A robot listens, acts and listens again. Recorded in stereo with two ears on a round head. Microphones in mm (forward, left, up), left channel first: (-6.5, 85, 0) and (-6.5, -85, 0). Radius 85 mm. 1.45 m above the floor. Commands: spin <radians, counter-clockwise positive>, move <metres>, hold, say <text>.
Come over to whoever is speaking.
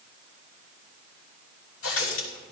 hold
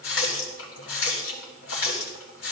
hold
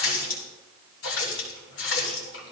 say I can't make out anyone speaking to turn to.